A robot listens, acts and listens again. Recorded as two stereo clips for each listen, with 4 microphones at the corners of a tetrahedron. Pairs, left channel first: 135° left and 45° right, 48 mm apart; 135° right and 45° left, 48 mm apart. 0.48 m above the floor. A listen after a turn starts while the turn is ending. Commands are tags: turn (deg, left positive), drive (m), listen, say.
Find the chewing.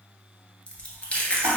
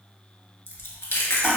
<turn deg="-155"/>
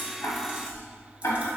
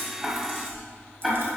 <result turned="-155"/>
<turn deg="20"/>
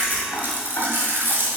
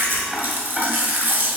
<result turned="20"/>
<say>Found it: chewing, straight ahead.</say>